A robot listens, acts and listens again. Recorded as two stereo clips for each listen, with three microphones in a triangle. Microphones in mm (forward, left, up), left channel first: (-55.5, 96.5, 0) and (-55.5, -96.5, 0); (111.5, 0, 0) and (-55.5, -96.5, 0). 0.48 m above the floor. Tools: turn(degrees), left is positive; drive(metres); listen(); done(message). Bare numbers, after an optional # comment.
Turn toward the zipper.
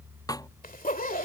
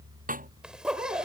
# The zipper: 125° left.
turn(125)
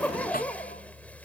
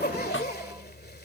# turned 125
# The zipper is now 10° left.
turn(10)
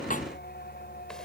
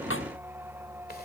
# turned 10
listen()
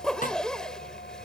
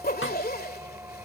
done("Found it: a zipper, straight ahead.")